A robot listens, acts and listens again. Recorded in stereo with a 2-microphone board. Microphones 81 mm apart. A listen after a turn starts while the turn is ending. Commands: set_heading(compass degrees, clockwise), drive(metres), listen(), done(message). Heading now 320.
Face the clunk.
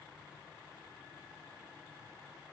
listen()
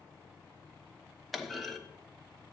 set_heading(290)
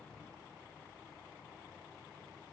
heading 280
listen()
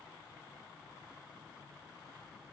done("I heard a clunk, but can't make it out now. It was about 40° right or 140° left.")